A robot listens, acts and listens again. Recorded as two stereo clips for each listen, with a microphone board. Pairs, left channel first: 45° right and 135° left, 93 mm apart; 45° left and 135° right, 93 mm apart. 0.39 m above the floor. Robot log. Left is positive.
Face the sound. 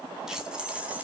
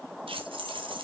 note: The keys jangling: 150° right.
cmd yaw -150
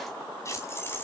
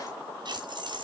note: The keys jangling is now 110° right.
cmd yaw -110
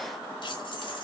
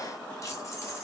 note: The keys jangling is now 10° right.
cmd yaw -10
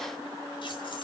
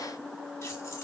cmd idle
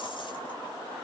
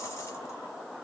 cmd idle
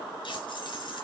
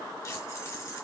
note: The keys jangling is now 10° right.
cmd yaw -10
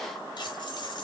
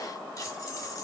end: Facing the keys jangling, 2 to 4 m away.